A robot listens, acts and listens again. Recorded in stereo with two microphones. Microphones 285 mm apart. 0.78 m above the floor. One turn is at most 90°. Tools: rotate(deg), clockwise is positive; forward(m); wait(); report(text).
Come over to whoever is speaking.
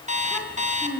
rotate(-30)
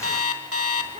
rotate(25)
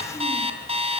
wait()
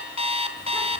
wait()
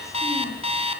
report("I heard a child speaking from this way, but can't make it out now. I did not reach it.")